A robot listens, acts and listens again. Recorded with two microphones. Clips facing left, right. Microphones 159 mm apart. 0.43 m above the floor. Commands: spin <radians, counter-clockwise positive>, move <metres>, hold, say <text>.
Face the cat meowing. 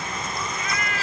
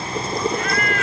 spin -0.96
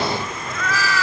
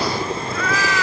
say Found it: a cat meowing, straight ahead.